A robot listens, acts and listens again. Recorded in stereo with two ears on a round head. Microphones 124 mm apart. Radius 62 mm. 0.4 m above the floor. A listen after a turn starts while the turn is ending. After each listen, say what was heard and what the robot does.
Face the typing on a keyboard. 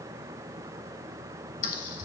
The typing on a keyboard: about 65° left or 115° left. Turn 65° left.
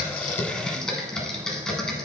Found it: typing on a keyboard, straight ahead, under 1 m away.